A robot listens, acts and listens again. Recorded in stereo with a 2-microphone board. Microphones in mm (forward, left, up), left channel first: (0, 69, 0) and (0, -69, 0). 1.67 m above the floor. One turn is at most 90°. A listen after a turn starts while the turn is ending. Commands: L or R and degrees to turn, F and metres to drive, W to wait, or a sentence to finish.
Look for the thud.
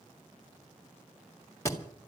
L20
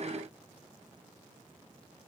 W
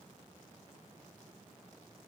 I heard a thud, but can't make it out now. It was about straight ahead or 140° left.